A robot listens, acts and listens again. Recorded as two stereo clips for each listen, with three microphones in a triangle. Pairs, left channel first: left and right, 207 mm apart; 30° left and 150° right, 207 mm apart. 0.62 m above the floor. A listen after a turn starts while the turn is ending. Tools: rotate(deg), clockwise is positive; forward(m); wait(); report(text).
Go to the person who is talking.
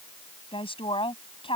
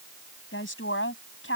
rotate(-25)
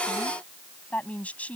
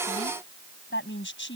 forward(1.0)
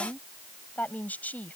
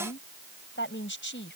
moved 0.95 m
rotate(-10)
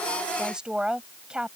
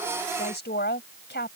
forward(1.0)
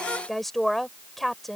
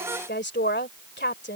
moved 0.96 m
forward(1.0)
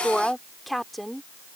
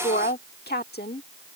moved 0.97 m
forward(1.0)
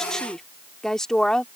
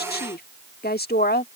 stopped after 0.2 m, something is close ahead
report("Arrived at the woman speaking, straight ahead.")